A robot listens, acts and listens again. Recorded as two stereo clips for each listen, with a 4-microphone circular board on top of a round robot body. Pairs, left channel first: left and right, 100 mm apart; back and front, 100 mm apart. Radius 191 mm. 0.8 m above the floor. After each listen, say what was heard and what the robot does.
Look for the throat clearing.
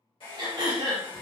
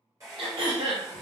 The throat clearing: 40° right. Turn 40° right.
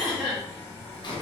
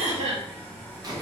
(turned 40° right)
Found it: throat clearing, straight ahead.